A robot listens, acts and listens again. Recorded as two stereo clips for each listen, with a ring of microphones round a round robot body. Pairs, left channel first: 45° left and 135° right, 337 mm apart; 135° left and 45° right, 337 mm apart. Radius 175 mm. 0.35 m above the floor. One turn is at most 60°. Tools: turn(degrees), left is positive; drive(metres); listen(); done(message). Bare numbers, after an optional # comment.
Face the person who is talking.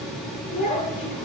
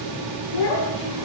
# The child speaking: 115° left.
turn(60)
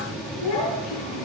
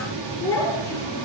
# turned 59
# The child speaking is now 55° left.
turn(55)
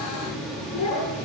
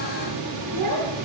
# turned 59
done("Facing the child speaking, over 4 m away.")